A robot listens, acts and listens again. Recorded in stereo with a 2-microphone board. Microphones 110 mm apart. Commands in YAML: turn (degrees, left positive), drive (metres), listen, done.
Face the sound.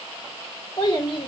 turn: 45
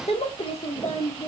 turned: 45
turn: 60
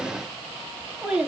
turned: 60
turn: -10
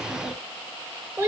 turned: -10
turn: -20
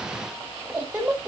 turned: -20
turn: -10
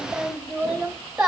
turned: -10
done: "Found it: a child speaking, straight ahead."